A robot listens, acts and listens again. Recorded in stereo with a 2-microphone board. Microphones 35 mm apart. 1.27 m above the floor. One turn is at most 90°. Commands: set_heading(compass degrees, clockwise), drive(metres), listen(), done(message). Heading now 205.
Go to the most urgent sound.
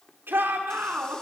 set_heading(295)
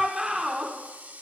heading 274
set_heading(294)
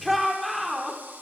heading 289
drive(1.0)
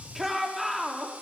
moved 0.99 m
drive(1.0)
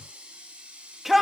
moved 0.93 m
drive(1.0)
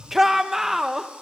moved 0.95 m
set_heading(299)
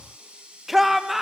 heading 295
drive(1.0)
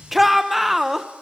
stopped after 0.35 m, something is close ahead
done("I am next to the shout.")